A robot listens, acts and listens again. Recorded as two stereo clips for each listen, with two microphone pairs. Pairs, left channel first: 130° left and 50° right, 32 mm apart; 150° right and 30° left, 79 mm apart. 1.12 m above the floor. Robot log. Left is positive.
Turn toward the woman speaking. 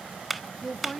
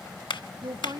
note: The woman speaking: 45° left.
cmd yaw +45
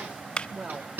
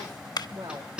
note: The woman speaking is now 10° right.
cmd yaw -10
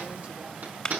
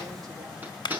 cmd idle
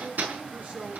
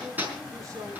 note: The woman speaking is now 15° right.
cmd yaw -15
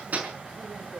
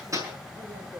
cmd idle
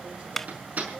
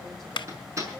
cmd idle
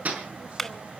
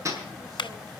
end: I heard a woman speaking from this way, but can't make it out now.